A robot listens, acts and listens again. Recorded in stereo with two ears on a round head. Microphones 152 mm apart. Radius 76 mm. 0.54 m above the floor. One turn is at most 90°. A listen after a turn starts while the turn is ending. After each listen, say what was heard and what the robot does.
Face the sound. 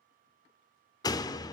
The door slam: about 25° left or 155° left. Turn 25° left.
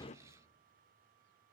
Keep listening.
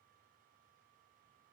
I heard a door slam, but can't make it out now. It was about straight ahead or 130° left.